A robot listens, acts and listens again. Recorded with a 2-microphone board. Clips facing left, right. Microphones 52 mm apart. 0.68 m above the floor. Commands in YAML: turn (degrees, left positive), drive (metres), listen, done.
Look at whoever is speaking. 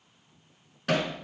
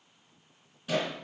listen: true
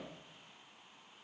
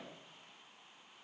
listen: true
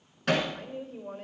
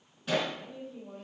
turn: 55
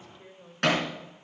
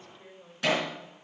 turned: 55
turn: 10
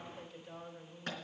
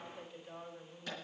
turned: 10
done: "Facing the woman speaking."